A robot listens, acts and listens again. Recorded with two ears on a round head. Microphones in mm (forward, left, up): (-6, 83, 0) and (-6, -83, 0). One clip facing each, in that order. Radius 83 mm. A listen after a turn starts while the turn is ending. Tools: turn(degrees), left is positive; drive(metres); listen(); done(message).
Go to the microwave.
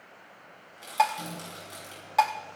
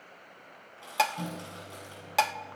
turn(degrees=-60)
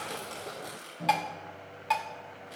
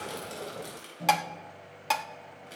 drive(metres=1.0)
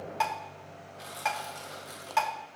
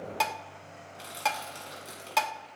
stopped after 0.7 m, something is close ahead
done("Something is in my way. I am facing the microwave but have not reached it.")